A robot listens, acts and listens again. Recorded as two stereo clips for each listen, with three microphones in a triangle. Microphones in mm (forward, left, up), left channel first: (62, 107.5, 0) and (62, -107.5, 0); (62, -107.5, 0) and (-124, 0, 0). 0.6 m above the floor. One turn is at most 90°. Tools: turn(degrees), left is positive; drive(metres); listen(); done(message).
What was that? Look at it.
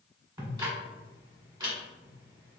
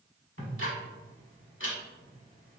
turn(degrees=-20)
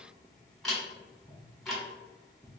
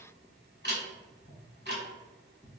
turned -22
done("Facing the ticking.")